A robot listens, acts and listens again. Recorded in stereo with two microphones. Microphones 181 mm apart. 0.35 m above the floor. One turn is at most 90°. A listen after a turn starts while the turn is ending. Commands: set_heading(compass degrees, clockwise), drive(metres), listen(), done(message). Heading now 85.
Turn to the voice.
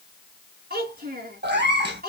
set_heading(140)
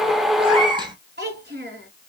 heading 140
set_heading(205)
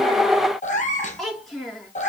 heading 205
done("Found it: a child speaking, straight ahead, 2 to 4 m away.")